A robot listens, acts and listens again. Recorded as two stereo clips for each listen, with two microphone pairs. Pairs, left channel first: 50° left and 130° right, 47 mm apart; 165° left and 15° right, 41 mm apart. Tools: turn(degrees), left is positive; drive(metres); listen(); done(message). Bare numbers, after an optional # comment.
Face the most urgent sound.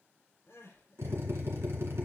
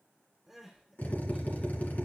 # The crying: 70° left.
turn(70)
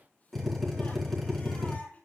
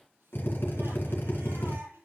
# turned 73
done("Facing the crying, over 4 m away.")